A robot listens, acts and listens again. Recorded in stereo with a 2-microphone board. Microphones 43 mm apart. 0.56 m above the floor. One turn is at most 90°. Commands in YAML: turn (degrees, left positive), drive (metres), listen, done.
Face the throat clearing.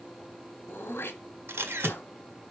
turn: 60
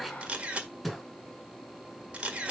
done: "Facing the throat clearing."